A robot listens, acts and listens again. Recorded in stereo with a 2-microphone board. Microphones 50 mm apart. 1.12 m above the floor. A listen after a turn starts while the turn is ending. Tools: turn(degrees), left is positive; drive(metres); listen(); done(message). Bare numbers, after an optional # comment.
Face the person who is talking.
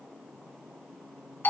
listen()
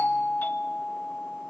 listen()
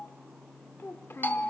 # The child speaking: about 55° left or 125° left.
turn(55)
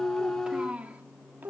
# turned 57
# So it is at 45° right.
turn(-45)
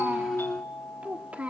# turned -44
# The child speaking is now 30° right.
turn(-30)
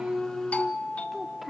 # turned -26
done("Found it: a child speaking, straight ahead, 1 to 2 m away.")